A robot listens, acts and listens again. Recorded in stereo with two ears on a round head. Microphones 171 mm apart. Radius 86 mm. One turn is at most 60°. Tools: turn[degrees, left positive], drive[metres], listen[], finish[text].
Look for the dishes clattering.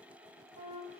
Action: listen[]
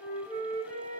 Action: listen[]
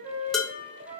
Action: turn[30]
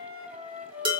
Thought: So it is at 30° right.
Action: turn[-30]
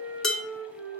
Action: finish[Found it: dishes clattering, straight ahead.]